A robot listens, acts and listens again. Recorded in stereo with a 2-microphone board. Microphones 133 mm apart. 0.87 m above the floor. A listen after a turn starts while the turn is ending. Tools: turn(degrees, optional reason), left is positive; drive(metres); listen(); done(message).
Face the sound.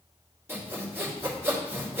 turn(degrees=-20, reason="The sawing: about 20° right or 160° right.")
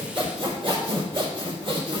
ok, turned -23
turn(degrees=-135, reason="So it is at 135° right.")
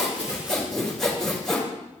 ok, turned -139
done("Found it: sawing, straight ahead.")